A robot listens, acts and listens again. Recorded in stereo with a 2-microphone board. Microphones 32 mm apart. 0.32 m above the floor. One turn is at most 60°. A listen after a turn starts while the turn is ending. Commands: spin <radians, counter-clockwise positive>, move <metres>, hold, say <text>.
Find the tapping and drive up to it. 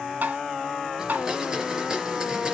spin -1.05
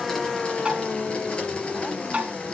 spin -0.70
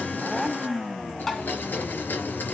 spin 0.26
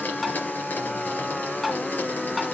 move 1.0
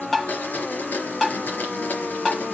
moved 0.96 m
move 1.0
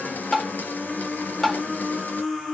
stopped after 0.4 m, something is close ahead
spin 0.17
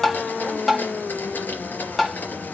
say Arrived at the tapping, straight ahead.